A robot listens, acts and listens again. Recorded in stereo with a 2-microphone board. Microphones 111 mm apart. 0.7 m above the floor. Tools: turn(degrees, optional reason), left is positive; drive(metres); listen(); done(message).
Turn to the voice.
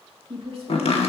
turn(degrees=-55, reason="The woman speaking: about 55° right or 125° right.")
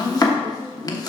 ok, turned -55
listen()
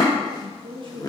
turn(degrees=-55, reason="So it is at 55° right.")
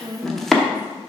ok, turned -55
turn(degrees=-15, reason="The woman speaking is now 15° right.")
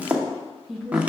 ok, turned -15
done("Found it: a woman speaking, straight ahead.")